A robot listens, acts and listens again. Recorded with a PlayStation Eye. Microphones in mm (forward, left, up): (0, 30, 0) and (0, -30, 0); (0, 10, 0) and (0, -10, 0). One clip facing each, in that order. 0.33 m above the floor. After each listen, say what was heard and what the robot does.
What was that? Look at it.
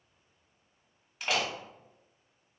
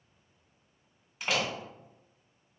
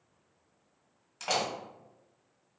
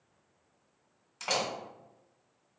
Turn 30° left.
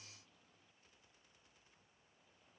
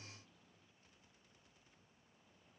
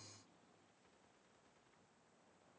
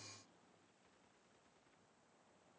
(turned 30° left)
Keep listening.
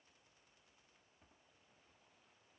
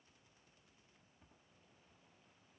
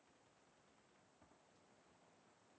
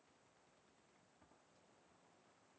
I heard a door slam, but can't make it out now. It was about 30° right or 150° left.